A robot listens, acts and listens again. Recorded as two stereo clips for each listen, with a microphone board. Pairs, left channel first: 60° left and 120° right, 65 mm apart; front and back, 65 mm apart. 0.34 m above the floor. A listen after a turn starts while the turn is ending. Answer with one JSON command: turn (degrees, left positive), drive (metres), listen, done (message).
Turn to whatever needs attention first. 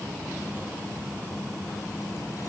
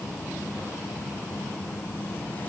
{"listen": true}
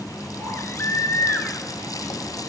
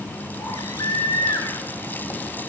{"turn": 10}
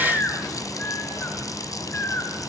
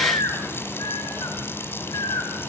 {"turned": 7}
{"done": "Facing the baby crying, over 4 m away."}